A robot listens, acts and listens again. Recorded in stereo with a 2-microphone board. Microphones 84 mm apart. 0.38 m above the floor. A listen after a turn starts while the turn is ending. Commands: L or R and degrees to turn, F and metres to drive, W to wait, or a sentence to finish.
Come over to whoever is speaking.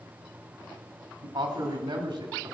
R65
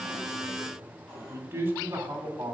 R30
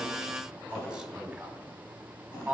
R10
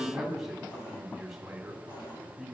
F1.0
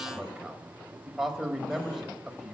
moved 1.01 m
F1.0
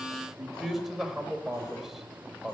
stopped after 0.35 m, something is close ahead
Arrived at the man speaking, straight ahead.